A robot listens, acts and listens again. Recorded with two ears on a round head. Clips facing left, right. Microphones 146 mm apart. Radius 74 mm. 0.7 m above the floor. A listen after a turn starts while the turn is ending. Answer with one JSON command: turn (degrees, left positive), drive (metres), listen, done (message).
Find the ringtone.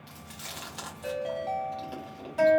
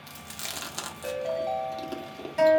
{"turn": -30}
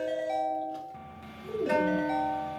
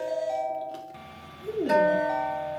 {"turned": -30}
{"turn": 20}
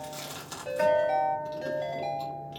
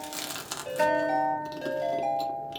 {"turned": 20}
{"done": "Found it: a ringtone, straight ahead."}